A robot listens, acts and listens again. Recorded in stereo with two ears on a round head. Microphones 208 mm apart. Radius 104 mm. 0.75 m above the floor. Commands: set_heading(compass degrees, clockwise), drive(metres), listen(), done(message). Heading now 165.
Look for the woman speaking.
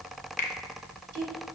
set_heading(235)
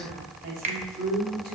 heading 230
set_heading(275)
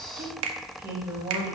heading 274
set_heading(289)
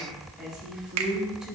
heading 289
done("Facing the woman speaking.")